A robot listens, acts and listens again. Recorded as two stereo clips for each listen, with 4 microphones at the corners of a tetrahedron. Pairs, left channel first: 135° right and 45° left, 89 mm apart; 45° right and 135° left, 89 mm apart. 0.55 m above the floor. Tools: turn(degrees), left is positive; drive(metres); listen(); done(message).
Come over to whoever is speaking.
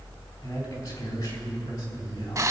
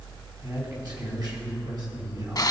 turn(degrees=175)
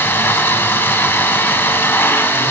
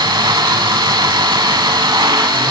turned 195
turn(degrees=-20)
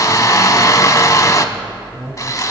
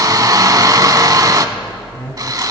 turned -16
drive(metres=1.0)
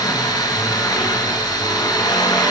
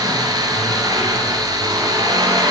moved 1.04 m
listen()
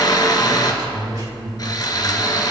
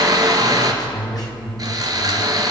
drive(metres=1.0)
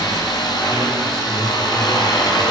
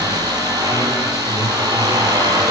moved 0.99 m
listen()
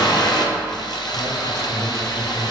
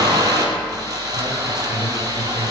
listen()
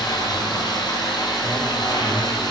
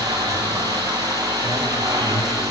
done("Facing where the man speaking came from. I can't hear it now. I did not reach it.")